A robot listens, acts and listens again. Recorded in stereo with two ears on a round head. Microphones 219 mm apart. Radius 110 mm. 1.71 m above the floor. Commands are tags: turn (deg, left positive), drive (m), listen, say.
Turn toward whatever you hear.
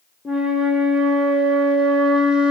<turn deg="-30"/>
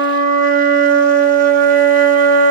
<turn deg="-145"/>
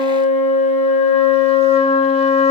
<turn deg="25"/>
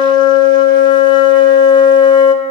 <turn deg="20"/>
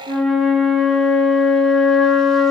<say>Facing the flute.</say>